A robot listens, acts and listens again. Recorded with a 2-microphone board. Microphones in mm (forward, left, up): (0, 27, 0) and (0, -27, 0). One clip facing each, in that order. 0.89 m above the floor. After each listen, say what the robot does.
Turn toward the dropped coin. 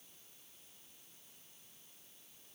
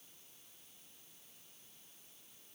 Keep listening.
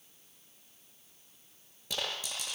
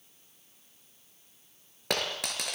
Turn 65° right.
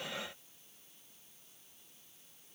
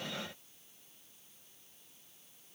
Keep listening.
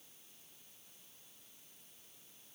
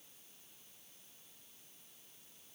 I heard a dropped coin, but can't make it out now. It was about straight ahead or 50° right.